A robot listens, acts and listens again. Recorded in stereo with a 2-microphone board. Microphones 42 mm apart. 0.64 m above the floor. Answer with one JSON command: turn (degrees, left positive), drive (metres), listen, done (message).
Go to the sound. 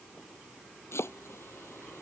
{"turn": 90}
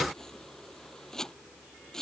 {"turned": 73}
{"turn": 15}
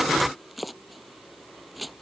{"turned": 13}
{"drive": 1.0}
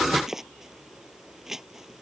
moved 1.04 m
{"turn": -10}
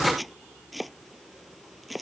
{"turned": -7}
{"drive": 1.0}
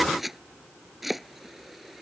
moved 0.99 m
{"drive": 1.0}
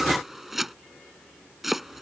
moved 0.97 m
{"drive": 1.0}
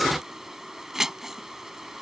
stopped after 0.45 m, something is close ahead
{"turn": -10}
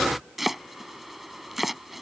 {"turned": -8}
{"done": "Arrived at the chopping, straight ahead."}